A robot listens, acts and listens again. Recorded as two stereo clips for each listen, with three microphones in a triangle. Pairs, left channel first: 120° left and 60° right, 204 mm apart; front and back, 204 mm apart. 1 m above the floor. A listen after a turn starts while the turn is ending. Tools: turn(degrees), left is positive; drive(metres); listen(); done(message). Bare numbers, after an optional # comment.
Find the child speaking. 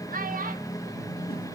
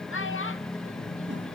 # The child speaking: 10° right.
turn(-10)
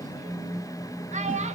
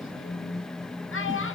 done("Facing the child speaking.")